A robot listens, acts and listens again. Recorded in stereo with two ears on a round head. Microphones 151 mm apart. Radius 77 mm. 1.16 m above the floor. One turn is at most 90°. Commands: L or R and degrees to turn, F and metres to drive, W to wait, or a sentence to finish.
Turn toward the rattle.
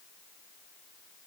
W
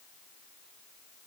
W
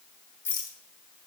L30
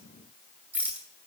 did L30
R10
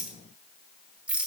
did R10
Found it: a rattle, straight ahead.